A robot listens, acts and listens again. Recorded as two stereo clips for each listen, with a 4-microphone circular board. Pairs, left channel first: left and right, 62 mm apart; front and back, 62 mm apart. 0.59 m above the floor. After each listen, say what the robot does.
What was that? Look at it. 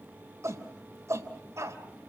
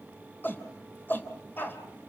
Turn 55° right.
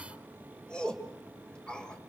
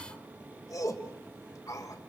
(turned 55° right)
Turn 15° left.
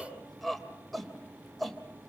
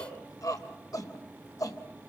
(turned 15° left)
Found it: a shout, straight ahead, 2 to 4 m away.